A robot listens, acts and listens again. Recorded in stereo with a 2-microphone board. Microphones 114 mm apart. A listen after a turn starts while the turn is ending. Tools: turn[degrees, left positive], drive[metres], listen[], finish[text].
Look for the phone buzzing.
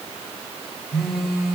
Action: turn[-30]
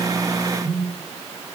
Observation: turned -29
Thought: So it is at 140° right.
Action: turn[-140]
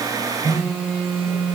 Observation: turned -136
Action: finish[Facing the phone buzzing, over 4 m away.]